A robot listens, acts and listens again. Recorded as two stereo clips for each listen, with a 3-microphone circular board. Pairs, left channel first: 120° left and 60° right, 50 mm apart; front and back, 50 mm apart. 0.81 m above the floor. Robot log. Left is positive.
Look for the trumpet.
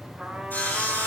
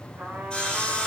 note: The trumpet: 135° right.
cmd yaw -135
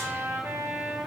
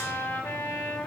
note: The trumpet is now 30° right.
cmd yaw -30
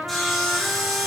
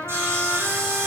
end: Found it: a trumpet, straight ahead, 2 to 4 m away.